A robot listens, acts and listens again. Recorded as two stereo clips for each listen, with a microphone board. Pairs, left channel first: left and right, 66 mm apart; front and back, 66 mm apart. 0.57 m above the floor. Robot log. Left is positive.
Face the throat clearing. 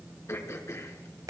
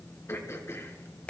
note: The throat clearing: 45° left.
cmd yaw +45
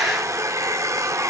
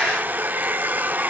cmd idle
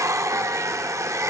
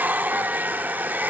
cmd idle
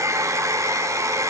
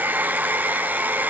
end: I heard throat clearing from this way, but can't make it out now.